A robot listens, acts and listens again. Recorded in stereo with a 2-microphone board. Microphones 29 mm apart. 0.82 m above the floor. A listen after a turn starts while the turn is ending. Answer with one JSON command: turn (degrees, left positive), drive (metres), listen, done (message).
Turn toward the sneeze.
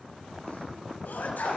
{"turn": 90}
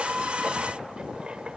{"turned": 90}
{"done": "I heard a sneeze from this way, but can't make it out now."}